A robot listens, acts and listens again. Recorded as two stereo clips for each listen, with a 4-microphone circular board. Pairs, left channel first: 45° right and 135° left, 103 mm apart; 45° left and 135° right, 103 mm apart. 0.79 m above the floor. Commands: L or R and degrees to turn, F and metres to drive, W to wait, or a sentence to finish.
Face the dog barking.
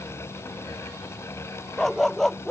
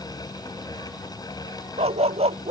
R130
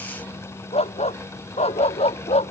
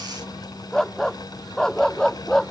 R40
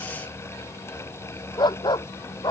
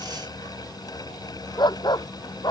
Facing the dog barking.